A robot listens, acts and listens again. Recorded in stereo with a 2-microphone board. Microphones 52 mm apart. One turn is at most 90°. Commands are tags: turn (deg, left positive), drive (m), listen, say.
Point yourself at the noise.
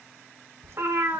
<turn deg="-55"/>
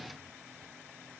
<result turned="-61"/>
<listen/>
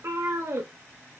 <turn deg="-65"/>
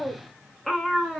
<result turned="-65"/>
<say>Found it: a cat meowing, straight ahead, 1 to 2 m away.</say>